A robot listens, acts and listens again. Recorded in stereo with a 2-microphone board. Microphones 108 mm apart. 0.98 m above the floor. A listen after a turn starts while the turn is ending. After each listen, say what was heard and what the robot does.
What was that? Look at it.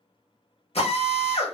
The drill: about 75° left or 105° left. Turn 75° left.
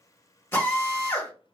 So it is at 25° left. Turn 25° left.
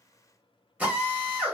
The drill is now 15° right. Turn 15° right.
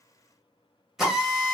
Found it: a drill, straight ahead, 1 to 2 m away.